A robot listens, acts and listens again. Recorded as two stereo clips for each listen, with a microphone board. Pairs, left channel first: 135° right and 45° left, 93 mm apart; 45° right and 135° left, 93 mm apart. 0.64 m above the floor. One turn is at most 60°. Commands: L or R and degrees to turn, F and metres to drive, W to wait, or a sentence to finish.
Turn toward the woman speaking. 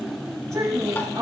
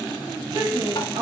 L60
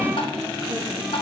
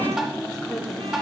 L45
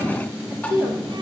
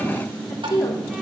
R10
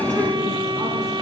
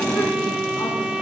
W
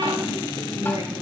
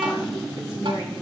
W
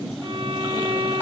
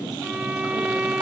I heard a woman speaking from this way, but can't make it out now.